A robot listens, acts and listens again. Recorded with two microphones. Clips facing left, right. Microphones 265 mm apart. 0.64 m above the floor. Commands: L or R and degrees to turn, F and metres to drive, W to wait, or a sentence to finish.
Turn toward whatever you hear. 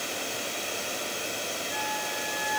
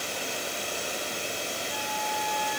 L20
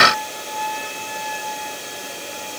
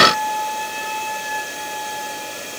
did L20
Found it: a flute, straight ahead, over 4 m away.